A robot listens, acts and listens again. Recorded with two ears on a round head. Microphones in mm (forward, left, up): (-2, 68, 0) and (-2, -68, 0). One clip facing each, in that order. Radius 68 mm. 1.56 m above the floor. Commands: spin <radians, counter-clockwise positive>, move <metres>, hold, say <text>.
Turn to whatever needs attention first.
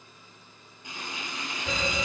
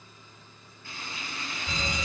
spin 1.22
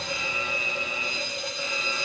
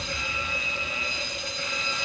say Facing the fire alarm.